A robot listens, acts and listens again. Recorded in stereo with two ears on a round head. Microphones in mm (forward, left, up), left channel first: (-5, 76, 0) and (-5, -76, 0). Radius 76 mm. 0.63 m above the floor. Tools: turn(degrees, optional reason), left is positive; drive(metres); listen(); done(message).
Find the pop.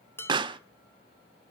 turn(degrees=-30, reason="The pop: about 30° right or 150° right.")
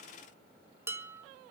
listen()
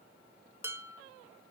done("I heard a pop, but can't make it out now. It was about straight ahead or 120° right.")